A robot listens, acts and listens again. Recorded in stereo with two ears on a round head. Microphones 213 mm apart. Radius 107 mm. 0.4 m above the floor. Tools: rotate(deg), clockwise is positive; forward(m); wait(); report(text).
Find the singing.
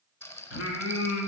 rotate(-60)
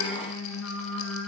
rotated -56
rotate(-60)
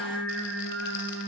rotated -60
report("Facing the singing, 2 to 4 m away.")